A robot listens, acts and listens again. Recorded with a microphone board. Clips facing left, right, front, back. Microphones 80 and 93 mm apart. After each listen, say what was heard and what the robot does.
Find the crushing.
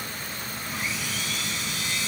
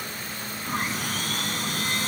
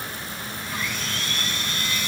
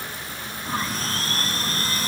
Keep listening.
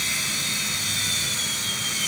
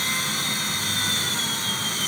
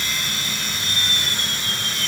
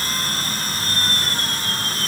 Keep listening.
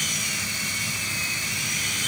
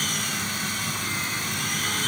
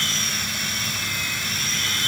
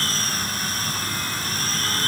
I can't make out crushing to turn to.